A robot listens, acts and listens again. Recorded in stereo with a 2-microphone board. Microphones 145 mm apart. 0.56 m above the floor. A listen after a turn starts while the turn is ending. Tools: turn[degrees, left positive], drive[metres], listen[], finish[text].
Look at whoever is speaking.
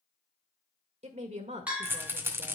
Thought: The woman speaking: about 55° right or 125° right.
Action: turn[-55]
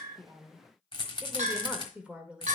Thought: So it is at 10° right.
Action: turn[-10]
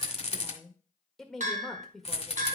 Action: finish[Found it: a woman speaking, straight ahead, 1 to 2 m away.]